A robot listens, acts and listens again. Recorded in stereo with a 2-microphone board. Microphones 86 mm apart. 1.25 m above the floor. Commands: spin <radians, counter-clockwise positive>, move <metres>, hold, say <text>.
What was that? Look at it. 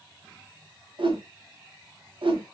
spin -1.57
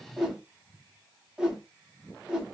spin -0.17
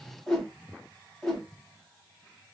say Facing the whoosh.